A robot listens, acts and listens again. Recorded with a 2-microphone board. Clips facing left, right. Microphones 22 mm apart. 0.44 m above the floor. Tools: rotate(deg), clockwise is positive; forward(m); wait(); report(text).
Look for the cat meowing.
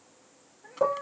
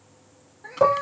rotate(70)
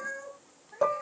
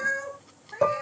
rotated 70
rotate(45)
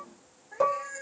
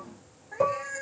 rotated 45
rotate(15)
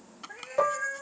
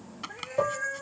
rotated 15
report("Found it: a cat meowing, straight ahead.")